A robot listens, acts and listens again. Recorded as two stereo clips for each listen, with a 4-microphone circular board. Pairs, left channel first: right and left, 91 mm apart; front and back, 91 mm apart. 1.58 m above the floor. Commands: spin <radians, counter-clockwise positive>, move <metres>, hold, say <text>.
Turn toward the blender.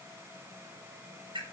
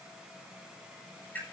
hold
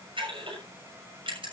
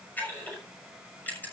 hold
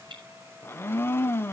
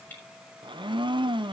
spin -2.71
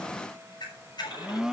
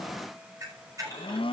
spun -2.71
say Facing the blender.